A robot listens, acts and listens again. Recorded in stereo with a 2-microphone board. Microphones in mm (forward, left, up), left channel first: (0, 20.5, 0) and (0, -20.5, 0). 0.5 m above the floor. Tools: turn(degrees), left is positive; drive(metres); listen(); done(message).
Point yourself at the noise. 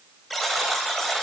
turn(degrees=30)
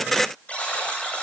turn(degrees=145)
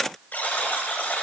turn(degrees=45)
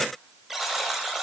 turn(degrees=-10)
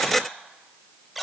done("Found it: a buzzer, straight ahead.")